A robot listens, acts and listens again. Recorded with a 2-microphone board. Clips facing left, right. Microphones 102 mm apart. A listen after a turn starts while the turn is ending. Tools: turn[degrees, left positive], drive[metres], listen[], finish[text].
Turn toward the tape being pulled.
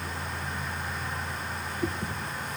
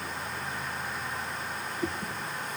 Action: listen[]
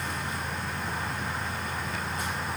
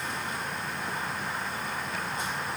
Action: listen[]
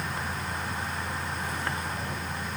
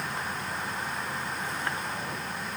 Action: finish[I can't make out tape being pulled.]